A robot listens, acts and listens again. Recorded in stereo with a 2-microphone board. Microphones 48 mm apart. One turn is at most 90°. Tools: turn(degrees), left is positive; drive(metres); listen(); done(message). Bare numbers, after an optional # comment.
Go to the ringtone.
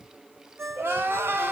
# The ringtone: about 65° right or 115° right.
turn(-65)
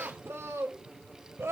listen()
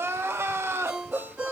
# So it is at 15° right.
turn(-15)
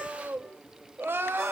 listen()
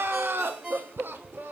drive(1.0)
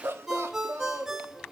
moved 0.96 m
drive(1.0)
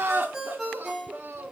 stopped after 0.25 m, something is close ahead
done("Arrived at the ringtone, straight ahead.")